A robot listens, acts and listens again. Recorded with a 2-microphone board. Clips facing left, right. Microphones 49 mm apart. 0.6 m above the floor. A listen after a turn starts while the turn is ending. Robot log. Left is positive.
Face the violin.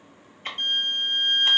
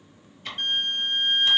cmd yaw -30
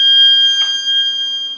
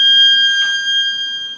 note: So it is at 15° left.
cmd yaw +15
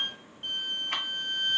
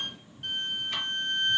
end: Facing the violin.